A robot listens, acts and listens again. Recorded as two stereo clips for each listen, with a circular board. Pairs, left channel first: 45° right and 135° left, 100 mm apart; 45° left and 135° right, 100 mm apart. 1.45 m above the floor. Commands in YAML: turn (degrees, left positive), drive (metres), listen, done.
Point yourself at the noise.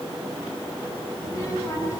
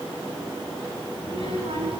turn: -105
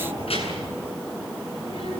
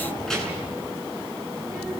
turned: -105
turn: -40
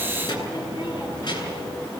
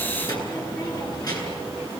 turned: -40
done: "Facing the child speaking."